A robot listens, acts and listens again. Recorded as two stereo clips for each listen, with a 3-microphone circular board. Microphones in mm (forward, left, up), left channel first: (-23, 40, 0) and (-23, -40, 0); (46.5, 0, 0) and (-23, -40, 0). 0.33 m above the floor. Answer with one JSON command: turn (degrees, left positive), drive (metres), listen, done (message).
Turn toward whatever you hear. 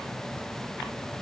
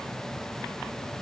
{"listen": true}
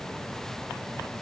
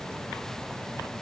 {"listen": true}
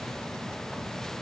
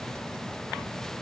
{"done": "I can't make out anything to turn to."}